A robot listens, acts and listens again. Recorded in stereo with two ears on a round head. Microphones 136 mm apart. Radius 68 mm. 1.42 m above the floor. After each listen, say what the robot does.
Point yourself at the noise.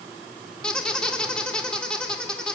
Turn 30° left.
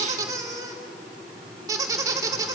Turn 25° right.
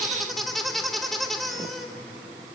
Facing the squeak, 2 to 4 m away.